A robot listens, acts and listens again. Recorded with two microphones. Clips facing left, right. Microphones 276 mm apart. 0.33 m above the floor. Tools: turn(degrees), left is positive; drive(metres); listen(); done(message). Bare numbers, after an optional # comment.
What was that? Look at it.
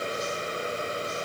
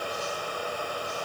listen()
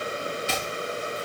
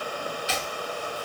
# The chopping: about 55° left or 125° left.
turn(55)
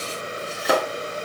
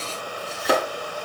done("Facing the chopping, 2 to 4 m away.")